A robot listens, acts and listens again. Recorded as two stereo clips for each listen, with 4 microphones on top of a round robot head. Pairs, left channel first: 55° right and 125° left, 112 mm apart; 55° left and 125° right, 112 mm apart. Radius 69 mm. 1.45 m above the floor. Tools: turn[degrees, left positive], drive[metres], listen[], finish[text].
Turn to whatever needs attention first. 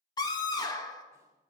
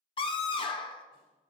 Action: finish[Found it: a scream, straight ahead, 2 to 4 m away.]